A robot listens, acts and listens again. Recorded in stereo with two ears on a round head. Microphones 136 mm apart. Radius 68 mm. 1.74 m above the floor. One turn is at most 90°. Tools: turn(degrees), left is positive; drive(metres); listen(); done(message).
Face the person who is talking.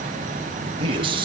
turn(degrees=-35)
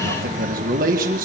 turn(degrees=-90)
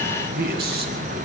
turn(degrees=-70)
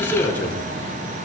turn(degrees=10)
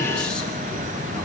listen()
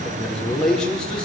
done("Found it: a man speaking, straight ahead, over 4 m away.")